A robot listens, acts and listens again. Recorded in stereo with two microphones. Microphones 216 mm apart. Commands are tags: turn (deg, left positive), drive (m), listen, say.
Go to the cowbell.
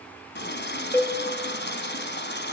<turn deg="30"/>
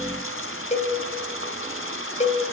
<turn deg="140"/>
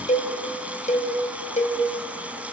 <turn deg="40"/>
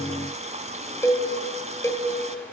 <turn deg="15"/>
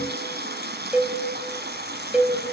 <drive m="1.0"/>
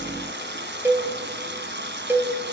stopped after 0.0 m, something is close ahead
<turn deg="-10"/>
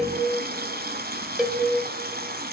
<say>Blocked. The cowbell is further on, straight ahead.</say>